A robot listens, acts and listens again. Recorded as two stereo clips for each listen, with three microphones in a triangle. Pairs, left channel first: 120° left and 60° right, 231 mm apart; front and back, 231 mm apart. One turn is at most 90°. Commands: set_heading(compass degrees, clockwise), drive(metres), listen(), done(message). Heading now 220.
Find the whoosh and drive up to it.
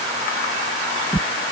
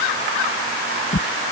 set_heading(190)
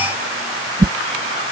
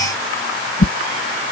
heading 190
drive(1.0)
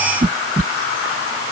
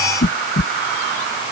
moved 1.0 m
set_heading(200)
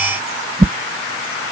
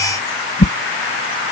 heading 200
drive(1.0)
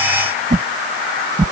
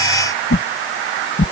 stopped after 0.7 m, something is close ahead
set_heading(210)
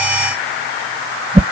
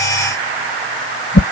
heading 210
done("Arrived at the whoosh, straight ahead.")